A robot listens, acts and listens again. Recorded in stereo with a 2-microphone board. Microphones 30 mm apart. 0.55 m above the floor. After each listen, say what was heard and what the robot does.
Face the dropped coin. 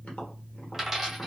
Turn 30° right.
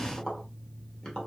Keep listening.
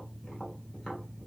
I heard a dropped coin, but can't make it out now. It was about 20° left or 140° right.